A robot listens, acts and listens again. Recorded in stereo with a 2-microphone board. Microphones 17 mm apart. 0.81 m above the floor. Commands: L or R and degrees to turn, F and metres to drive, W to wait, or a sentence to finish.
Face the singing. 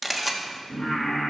L50
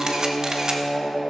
L85
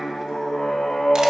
L55
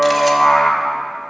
L15
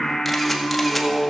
L20
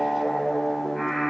Found it: singing, straight ahead.